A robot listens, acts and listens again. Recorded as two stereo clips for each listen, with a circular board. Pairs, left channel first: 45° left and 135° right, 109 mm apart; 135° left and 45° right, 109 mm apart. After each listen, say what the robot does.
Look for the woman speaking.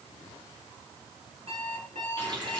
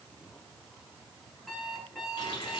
Keep listening.
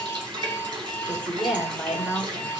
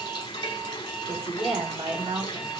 Turn 55° right.
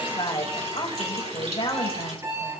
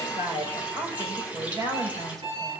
Turn 10° left.
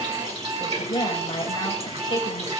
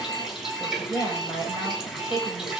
Found it: a woman speaking, straight ahead, over 4 m away.